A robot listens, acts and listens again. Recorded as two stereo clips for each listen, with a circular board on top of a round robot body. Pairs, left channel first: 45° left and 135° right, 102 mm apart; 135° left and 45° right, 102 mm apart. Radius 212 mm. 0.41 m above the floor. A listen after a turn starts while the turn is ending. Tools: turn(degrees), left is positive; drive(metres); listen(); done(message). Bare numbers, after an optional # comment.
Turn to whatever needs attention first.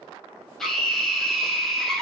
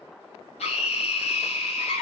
# The scream: 130° left.
turn(130)
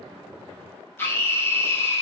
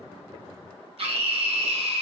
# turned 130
# The scream is now 20° right.
turn(-20)
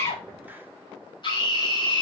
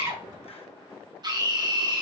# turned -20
done("Found it: a scream, straight ahead, 2 to 4 m away.")